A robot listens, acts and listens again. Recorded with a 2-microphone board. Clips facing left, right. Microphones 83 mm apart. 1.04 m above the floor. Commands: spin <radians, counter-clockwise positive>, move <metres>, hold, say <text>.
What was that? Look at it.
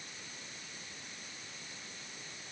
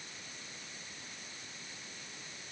hold
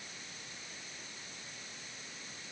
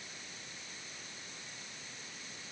hold
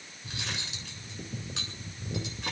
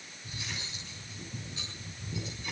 spin 1.57
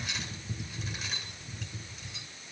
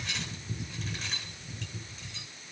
say Found it: cutlery clinking, straight ahead, over 4 m away.